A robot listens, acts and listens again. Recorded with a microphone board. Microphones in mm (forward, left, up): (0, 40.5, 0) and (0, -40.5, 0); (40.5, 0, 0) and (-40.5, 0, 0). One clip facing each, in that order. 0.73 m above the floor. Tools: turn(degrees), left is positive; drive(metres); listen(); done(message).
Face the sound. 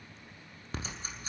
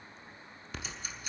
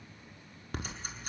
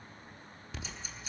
turn(degrees=35)
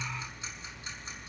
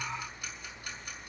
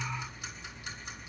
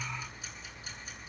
turn(degrees=20)
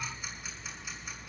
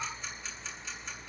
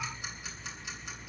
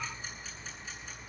done("Facing the ticking.")